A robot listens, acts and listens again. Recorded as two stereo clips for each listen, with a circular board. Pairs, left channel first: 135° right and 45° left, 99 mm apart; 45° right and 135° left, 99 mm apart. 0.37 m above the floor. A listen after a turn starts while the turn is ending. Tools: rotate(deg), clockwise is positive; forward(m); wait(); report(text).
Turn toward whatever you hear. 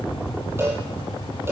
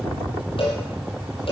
rotate(20)
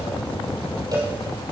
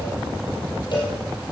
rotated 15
report("Facing the cowbell, over 4 m away.")